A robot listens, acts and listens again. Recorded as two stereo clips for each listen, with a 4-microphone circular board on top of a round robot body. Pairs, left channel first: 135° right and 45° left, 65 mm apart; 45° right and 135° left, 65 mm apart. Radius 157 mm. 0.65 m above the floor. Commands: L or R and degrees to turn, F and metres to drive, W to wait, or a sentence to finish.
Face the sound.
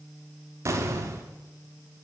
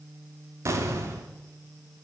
L85
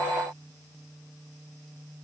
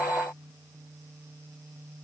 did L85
I heard an explosion from this way, but can't make it out now.